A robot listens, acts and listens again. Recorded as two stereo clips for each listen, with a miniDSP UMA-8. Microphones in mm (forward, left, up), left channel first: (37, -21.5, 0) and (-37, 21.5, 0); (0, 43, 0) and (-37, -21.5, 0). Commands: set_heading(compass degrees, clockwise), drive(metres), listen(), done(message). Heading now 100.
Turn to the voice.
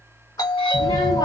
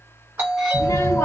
set_heading(90)
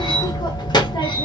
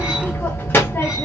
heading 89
done("Found it: a child speaking, straight ahead.")